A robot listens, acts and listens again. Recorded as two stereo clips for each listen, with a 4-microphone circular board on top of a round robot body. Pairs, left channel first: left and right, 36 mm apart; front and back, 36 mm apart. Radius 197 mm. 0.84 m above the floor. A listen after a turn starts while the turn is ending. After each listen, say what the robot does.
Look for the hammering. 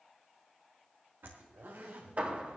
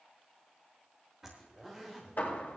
Turn 45° right.
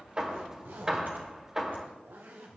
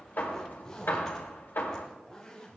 Turn 20° right.
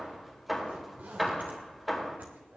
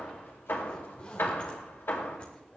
Found it: hammering, straight ahead.